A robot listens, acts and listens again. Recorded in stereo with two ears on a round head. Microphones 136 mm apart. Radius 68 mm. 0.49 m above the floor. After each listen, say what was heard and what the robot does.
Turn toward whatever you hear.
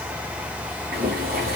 The boiling: about 60° right or 120° right. Turn 60° right.
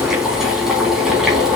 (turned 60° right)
Facing the boiling, 2 to 4 m away.